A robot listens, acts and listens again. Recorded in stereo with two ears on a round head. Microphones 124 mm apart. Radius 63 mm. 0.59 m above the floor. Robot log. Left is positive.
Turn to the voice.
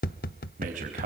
note: The man speaking: about 65° right or 115° right.
cmd yaw -65
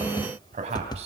note: So it is at 45° right.
cmd yaw -45
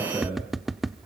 note: The man speaking is now 15° right.
cmd yaw -15
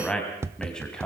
end: Found it: a man speaking, straight ahead, 2 to 4 m away.